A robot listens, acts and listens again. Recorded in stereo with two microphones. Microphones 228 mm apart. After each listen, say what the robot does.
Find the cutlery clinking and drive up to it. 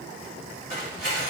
Turn 40° left.
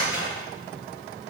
Turn 100° left.
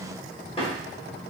Turn 25° left.
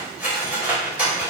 Drive 1.0 m forward.
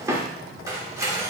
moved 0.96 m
Turn 15° right.
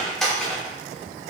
Drive 1.0 m forward.
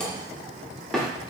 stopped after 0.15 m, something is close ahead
I am next to the cutlery clinking.